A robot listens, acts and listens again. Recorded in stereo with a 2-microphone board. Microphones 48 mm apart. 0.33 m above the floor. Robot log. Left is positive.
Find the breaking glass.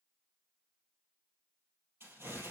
cmd idle
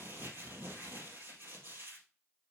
cmd idle
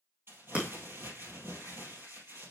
note: The breaking glass: about 25° right or 155° right.
cmd yaw -25
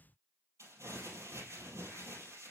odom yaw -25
cmd idle
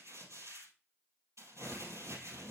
end: I heard breaking glass, but can't make it out now. It was about straight ahead or 130° right.